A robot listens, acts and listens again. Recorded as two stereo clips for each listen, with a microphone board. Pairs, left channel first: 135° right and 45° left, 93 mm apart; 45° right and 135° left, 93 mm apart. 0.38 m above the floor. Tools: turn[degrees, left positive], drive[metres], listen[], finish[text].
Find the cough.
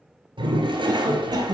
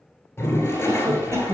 Thought: The cough: 80° left.
Action: turn[80]
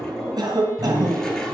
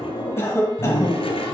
Thought: The cough is now 10° left.
Action: turn[10]
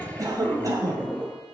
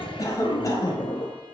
Action: finish[Facing the cough, 2 to 4 m away.]